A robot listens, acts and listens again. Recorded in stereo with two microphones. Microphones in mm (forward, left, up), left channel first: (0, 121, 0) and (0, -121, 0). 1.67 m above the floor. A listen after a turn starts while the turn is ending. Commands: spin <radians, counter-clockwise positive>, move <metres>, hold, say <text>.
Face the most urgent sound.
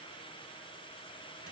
hold
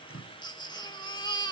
spin 0.26
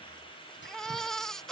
say Facing the baby crying.